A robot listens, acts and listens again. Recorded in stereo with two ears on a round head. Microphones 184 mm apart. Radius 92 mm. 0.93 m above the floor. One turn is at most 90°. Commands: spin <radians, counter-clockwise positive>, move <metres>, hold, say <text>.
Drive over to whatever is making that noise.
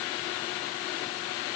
hold
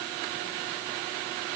hold
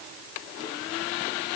say I can't make out anything to turn to.